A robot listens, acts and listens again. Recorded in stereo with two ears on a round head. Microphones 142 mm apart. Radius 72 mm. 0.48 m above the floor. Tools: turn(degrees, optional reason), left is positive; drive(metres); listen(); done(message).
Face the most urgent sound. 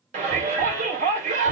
turn(degrees=-50, reason="The shout: about 50° right or 130° right.")
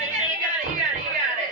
turn(degrees=-65, reason="So it is at 65° right.")
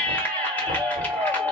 turn(degrees=10, reason="The shout is now 10° left.")
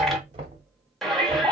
done("Found it: a shout, straight ahead.")